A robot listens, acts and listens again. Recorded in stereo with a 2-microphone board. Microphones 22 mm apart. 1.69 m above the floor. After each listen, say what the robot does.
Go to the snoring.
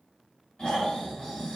Turn 40° left.
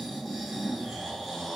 Drive 1.0 m forward.
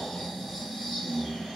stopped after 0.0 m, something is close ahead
Turn 10° left.
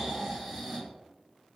Something is in my way. I am facing the snoring but have not reached it.